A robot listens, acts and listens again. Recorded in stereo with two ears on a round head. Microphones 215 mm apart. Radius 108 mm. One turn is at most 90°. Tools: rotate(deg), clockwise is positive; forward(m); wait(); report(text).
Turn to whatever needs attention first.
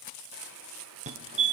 rotate(30)
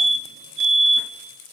rotate(90)
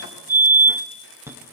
rotate(10)
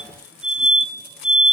report("Facing the fire alarm.")